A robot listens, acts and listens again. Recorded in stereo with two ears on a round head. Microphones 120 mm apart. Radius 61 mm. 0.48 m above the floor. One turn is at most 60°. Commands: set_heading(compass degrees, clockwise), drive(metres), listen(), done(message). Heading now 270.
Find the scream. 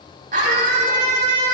set_heading(330)
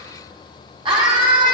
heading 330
set_heading(10)
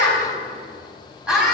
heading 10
done("Found it: a scream, straight ahead, over 4 m away.")